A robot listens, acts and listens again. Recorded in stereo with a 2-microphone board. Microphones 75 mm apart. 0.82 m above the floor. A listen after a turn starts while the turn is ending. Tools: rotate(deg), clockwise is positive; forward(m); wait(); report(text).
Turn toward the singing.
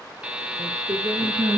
rotate(70)
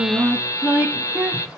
rotate(20)
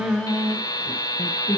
rotate(-35)
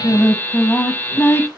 rotate(-35)
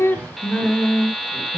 rotate(-25)
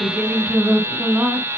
rotate(15)
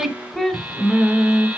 report("Found it: singing, straight ahead.")